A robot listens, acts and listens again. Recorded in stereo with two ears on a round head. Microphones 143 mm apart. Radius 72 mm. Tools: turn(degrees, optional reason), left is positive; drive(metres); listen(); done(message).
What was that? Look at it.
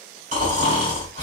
turn(degrees=-50, reason="The snoring: about 50° right or 130° right.")
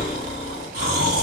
turn(degrees=-75, reason="So it is at 75° right.")
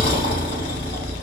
turn(degrees=35, reason="The snoring is now 35° left.")
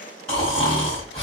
done("Facing the snoring, 1 to 2 m away.")